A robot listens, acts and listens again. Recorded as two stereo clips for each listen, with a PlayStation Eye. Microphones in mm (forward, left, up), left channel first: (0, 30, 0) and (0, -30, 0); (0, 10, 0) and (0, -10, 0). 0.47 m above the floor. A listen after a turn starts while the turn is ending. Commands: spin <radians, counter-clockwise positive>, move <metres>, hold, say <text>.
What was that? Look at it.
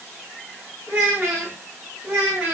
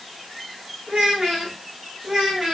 spin -0.79
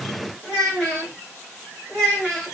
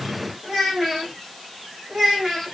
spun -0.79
say Found it: a child speaking, straight ahead, 2 to 4 m away.